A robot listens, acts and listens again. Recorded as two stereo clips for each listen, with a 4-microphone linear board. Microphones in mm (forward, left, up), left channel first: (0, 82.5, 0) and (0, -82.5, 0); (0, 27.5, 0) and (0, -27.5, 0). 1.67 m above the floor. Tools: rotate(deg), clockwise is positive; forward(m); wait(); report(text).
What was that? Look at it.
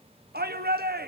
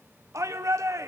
rotate(90)
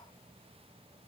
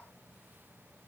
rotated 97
wait()
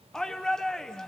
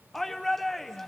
report("Facing the shout, 1 to 2 m away.")